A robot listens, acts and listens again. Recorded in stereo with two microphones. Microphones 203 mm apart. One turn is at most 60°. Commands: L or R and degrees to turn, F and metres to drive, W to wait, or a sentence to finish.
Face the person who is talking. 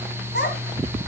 L55
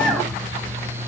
W
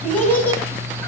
L10
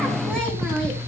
W
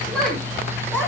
L10
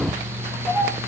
Found it: a child speaking, straight ahead, over 4 m away.